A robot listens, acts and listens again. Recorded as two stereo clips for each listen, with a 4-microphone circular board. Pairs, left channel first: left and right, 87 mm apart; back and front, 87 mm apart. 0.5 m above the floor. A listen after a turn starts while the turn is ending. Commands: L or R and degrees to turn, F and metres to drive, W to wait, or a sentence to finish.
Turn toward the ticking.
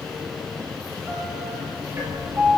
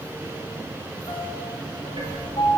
R30
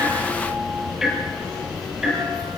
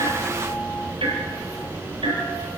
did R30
Facing the ticking.